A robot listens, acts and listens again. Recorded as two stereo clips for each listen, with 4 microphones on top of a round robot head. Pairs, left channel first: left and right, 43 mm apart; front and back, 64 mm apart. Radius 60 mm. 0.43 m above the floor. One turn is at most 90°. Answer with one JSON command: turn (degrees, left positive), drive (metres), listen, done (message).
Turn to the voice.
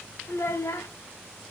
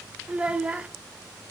{"turn": 90}
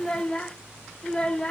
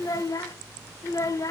{"turn": 25}
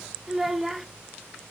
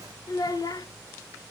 {"done": "Facing the child speaking."}